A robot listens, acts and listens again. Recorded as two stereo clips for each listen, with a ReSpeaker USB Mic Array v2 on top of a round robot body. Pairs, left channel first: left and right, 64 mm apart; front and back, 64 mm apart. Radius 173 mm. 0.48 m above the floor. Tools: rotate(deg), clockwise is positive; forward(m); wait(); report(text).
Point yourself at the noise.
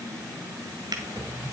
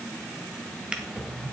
rotate(100)
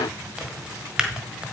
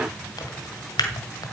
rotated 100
rotate(10)
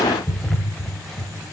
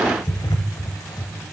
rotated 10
report("Found it: a drawer, straight ahead, 1 to 2 m away.")